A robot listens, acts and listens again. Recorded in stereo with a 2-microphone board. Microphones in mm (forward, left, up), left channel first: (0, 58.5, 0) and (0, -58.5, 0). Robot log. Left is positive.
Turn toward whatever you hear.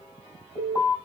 note: The alarm: about 45° left or 135° left.
cmd yaw +45
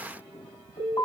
note: So it is at 90° left.
cmd yaw +90
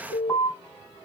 end: Found it: an alarm, straight ahead, 2 to 4 m away.